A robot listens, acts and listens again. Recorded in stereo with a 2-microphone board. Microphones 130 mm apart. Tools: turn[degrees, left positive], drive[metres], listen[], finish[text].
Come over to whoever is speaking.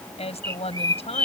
Thought: The woman speaking: about 55° left or 125° left.
Action: turn[55]
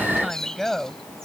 Action: drive[1.0]
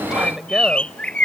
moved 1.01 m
Action: drive[1.0]
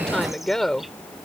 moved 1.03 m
Action: drive[1.0]
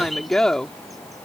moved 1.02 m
Action: drive[1.0]
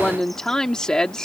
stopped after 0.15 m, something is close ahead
Thought: The woman speaking is now 10° left.
Action: turn[10]
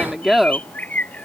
Action: finish[I am next to the woman speaking.]